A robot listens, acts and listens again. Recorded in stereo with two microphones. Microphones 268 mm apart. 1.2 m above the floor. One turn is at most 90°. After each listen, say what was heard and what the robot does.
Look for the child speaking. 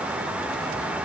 Keep listening.
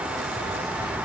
Keep listening.
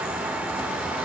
I can't make out a child speaking to turn to.